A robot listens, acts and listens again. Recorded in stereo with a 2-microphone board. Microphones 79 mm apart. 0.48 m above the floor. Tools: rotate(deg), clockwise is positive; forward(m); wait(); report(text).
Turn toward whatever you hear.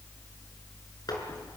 wait()
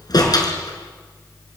rotate(-55)
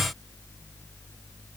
wait()
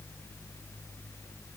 report("I heard a door slam, but can't make it out now. It was about straight ahead or 70° left.")